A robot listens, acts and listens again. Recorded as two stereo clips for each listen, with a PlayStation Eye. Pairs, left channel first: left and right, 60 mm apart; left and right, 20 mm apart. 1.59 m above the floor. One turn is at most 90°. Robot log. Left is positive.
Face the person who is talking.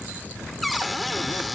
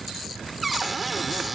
cmd idle
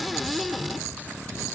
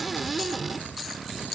cmd idle
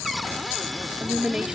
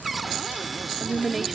cmd yaw -30
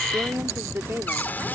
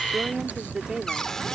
note: So it is at 140° right.
cmd yaw -90
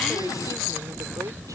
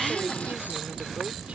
note: Nothing new. It was at 50° right.
cmd yaw -50
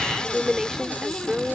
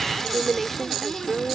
end: Found it: a woman speaking, straight ahead.